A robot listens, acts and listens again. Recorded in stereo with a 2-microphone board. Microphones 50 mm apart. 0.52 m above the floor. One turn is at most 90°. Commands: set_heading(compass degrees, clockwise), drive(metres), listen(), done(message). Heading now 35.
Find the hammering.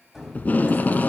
set_heading(5)
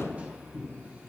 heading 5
set_heading(40)
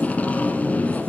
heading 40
listen()
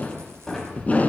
done("Facing the hammering, 2 to 4 m away.")